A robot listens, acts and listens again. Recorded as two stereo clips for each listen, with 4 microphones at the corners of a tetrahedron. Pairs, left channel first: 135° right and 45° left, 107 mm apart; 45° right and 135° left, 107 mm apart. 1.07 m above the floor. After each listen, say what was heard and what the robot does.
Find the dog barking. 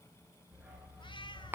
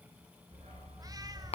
The dog barking: 130° left. Turn 130° left.
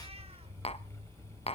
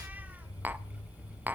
The dog barking is now 10° left. Turn 10° left.
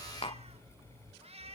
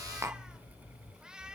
The dog barking is now 10° left. Turn 10° left.
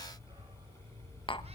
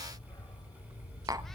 Facing the dog barking.